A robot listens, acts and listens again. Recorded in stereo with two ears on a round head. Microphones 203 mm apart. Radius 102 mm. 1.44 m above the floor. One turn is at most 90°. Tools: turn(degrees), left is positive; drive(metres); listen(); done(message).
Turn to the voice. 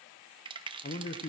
turn(degrees=35)
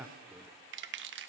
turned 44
turn(degrees=-10)
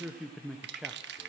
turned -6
done("Facing the man speaking.")